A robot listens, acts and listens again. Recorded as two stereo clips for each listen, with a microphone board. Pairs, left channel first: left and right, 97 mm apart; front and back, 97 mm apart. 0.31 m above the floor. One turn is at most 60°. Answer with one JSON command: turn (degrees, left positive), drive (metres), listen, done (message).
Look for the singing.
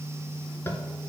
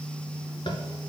{"listen": true}
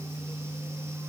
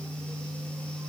{"listen": true}
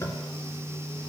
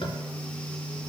{"done": "I can't make out singing, only tapping."}